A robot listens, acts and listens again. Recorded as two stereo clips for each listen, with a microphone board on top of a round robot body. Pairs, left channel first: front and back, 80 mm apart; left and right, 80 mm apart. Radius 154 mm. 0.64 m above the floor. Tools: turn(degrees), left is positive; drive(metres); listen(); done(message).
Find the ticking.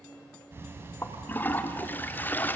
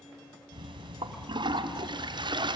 turn(degrees=-115)
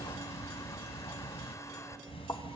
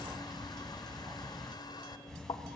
done("Facing the ticking, under 1 m away.")